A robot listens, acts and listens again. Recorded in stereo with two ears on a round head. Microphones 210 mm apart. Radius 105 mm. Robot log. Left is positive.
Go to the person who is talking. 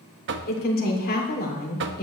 note: The woman speaking: about 40° left or 140° left.
cmd yaw +40
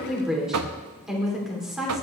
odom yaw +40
cmd fwd 1.0
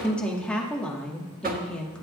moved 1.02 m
cmd fwd 1.0
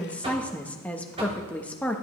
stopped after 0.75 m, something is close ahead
end: Arrived at the woman speaking, straight ahead.